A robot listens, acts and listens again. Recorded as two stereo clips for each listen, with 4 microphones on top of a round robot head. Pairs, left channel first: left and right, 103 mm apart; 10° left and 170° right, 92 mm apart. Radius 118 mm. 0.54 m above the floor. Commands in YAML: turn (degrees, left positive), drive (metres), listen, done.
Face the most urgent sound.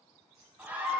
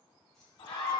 turn: -20
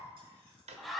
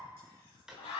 done: "Found it: a scream, straight ahead."